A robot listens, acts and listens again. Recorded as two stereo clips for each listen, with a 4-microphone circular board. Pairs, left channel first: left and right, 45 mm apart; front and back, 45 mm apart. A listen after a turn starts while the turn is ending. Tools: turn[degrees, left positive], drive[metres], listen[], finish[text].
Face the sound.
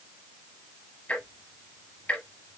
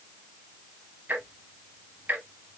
Thought: The ticking: 140° left.
Action: turn[140]
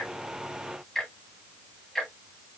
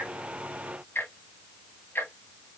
Action: finish[Facing the ticking.]